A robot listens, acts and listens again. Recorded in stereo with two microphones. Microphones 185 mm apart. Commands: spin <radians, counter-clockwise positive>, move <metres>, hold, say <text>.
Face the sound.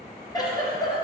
spin 0.44
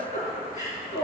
spin 2.36
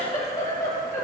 spin 0.35
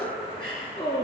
say Facing the giggle.